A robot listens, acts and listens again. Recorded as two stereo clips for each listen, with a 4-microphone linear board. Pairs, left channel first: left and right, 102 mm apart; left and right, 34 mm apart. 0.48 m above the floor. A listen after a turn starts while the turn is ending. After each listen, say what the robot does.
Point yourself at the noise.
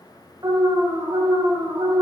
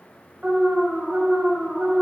Turn 40° right.
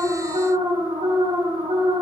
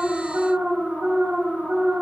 Turn 95° right.
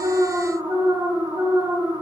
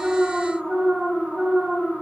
Turn 30° right.
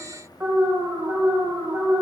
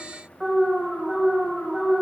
Turn 25° right.
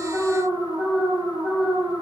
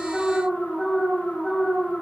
Found it: an alarm, straight ahead, 2 to 4 m away.